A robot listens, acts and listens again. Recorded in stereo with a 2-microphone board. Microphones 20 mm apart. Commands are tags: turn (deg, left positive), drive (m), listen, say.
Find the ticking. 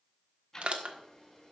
<turn deg="25"/>
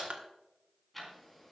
<say>Facing the ticking.</say>